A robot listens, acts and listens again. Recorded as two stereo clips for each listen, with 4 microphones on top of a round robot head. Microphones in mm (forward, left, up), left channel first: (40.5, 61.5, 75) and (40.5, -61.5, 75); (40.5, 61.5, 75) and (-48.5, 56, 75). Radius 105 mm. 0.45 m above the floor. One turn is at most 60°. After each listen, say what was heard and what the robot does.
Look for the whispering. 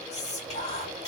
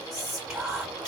The whispering: 95° left. Turn 60° left.
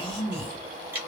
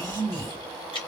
The whispering is now 45° left. Turn 45° left.
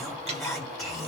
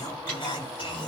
Facing the whispering, 2 to 4 m away.